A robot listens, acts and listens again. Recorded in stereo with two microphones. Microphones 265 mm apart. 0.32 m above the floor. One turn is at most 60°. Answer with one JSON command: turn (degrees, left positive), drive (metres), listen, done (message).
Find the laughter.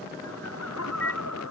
{"turn": 60}
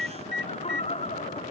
{"turn": 25}
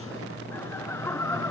{"turn": 10}
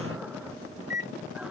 {"listen": true}
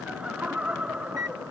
{"done": "Found it: laughter, straight ahead."}